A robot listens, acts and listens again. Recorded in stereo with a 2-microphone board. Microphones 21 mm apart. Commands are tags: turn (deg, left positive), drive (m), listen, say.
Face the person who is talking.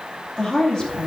<turn deg="35"/>
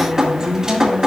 <turn deg="110"/>
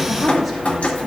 <listen/>
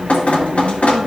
<listen/>
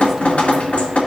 <say>I heard a woman speaking from this way, but can't make it out now.</say>